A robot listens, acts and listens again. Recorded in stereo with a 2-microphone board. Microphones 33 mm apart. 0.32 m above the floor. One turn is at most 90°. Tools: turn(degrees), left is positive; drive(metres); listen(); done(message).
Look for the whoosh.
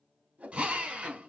turn(degrees=-45)
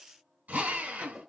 done("Found it: a whoosh, straight ahead, under 1 m away.")